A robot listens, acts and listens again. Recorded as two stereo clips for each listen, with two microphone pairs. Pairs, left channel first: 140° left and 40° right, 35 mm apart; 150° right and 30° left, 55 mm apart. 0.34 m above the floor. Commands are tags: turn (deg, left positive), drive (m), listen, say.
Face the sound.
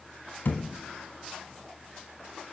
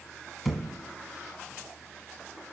<turn deg="120"/>
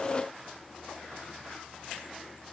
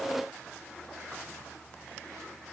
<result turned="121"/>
<say>I heard a thud from this way, but can't make it out now.</say>